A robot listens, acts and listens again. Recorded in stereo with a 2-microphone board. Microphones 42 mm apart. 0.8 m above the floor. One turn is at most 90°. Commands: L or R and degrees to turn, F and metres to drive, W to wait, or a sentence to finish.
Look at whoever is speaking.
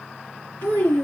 L70
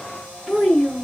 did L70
L10
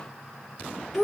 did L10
Facing the child speaking.